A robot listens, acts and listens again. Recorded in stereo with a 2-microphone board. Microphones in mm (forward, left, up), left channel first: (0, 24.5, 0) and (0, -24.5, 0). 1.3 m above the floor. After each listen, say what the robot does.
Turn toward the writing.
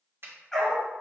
Keep listening.
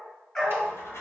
Turn 65° left.
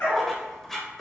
Found it: writing, straight ahead, 1 to 2 m away.